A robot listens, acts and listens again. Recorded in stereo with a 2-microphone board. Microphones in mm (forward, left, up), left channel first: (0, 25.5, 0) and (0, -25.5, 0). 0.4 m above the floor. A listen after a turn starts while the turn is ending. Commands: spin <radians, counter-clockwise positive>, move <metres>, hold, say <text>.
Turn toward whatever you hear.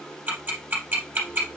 spin -0.61
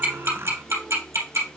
spin -1.83
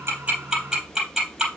spin -0.17
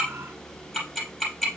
say Facing the ticking.